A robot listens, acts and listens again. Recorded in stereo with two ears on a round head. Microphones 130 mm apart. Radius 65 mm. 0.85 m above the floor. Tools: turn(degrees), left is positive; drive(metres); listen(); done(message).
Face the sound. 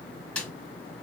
turn(degrees=30)
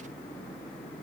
listen()
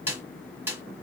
turn(degrees=-15)
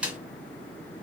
turn(degrees=-10)
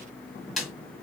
done("Facing the snare drum.")